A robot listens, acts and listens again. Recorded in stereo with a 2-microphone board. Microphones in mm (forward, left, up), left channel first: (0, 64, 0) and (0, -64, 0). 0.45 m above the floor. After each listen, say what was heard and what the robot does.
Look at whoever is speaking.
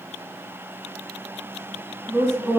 The woman speaking: about 20° right or 160° right. Turn 20° right.
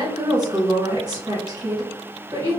So it is at 135° right. Turn 135° right.
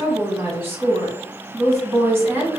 The woman speaking is now 25° right. Turn 25° right.
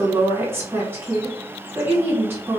The woman speaking is now 25° right. Turn 25° right.
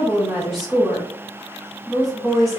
Found it: a woman speaking, straight ahead.